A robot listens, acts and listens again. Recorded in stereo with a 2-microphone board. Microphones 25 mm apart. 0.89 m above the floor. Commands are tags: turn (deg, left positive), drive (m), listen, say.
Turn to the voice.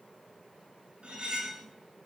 <listen/>
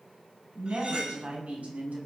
<turn deg="-90"/>
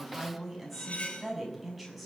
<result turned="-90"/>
<say>Facing the woman speaking.</say>